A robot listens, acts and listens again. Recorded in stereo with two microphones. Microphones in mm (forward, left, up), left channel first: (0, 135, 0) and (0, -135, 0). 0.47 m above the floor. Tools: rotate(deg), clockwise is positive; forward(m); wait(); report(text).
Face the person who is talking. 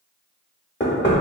wait()
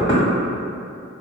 wait()
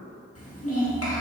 rotate(-60)
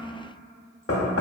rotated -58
wait()
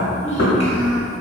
rotate(-30)
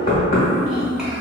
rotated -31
report("Found it: a child speaking, straight ahead, under 1 m away.")